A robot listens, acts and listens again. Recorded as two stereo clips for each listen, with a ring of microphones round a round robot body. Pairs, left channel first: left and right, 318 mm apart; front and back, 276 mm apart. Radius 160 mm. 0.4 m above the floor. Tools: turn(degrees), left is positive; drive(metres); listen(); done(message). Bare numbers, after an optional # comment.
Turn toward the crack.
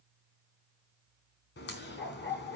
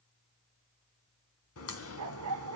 # The crack: 30° left.
turn(30)
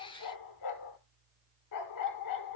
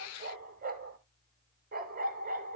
done("I heard a crack from this way, but can't make it out now.")